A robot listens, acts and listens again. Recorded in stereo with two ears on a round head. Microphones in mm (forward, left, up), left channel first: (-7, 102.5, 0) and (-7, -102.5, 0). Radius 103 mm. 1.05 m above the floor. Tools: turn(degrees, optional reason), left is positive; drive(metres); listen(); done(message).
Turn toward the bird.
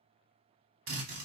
listen()
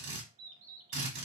turn(degrees=-60, reason="The bird: about 60° right or 120° right.")
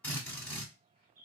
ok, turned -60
turn(degrees=-45, reason="So it is at 45° right.")
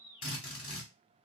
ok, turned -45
turn(degrees=-15, reason="The bird is now 15° right.")
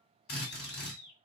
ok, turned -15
done("Facing the bird.")